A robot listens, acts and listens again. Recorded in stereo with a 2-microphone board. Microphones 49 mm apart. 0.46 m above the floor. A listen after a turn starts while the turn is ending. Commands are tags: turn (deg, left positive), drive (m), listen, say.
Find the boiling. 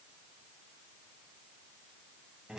<listen/>
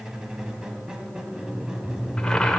<turn deg="30"/>
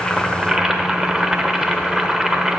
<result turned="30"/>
<turn deg="-15"/>
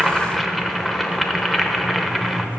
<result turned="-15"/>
<say>Found it: boiling, straight ahead.</say>